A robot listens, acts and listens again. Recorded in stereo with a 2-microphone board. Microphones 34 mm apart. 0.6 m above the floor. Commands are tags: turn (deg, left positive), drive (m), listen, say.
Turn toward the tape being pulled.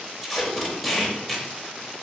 <turn deg="30"/>
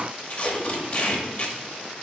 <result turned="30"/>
<turn deg="150"/>
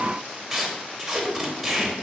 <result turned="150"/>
<turn deg="-10"/>
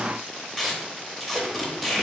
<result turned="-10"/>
<say>Facing the tape being pulled.</say>